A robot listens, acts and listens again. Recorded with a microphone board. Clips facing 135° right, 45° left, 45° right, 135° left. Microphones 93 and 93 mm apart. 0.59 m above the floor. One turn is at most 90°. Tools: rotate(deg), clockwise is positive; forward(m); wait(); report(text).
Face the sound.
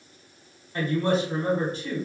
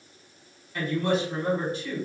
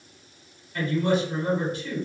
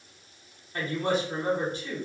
rotate(-90)
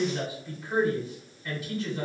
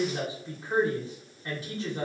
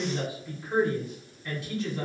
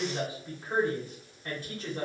rotate(-90)
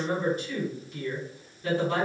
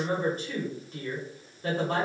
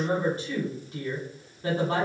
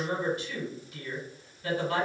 report("Found it: a woman speaking, straight ahead, 1 to 2 m away.")